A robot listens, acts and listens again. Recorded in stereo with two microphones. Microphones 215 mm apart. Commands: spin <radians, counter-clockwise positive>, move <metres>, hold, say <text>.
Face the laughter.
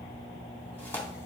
hold
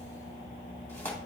hold
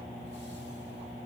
say I can't make out laughter, only tearing paper.